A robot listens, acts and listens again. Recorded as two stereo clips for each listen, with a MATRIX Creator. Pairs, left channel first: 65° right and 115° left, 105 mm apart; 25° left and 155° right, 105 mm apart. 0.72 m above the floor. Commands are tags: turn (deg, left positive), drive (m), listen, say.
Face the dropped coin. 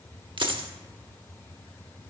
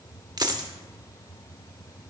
<turn deg="150"/>
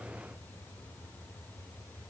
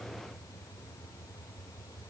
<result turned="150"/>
<say>Facing where the dropped coin came from. I can't hear it now.</say>